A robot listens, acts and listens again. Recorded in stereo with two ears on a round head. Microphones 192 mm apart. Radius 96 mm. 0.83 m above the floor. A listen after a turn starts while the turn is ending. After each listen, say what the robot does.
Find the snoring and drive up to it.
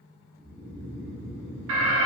Turn 30° left.
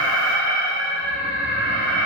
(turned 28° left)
Keep listening.
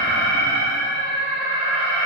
Keep listening.
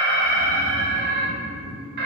Turn 120° left.
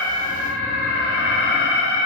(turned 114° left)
Keep listening.
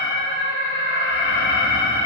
Keep listening.
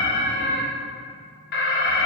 Facing where the snoring came from. I can't hear it now. I did not reach it.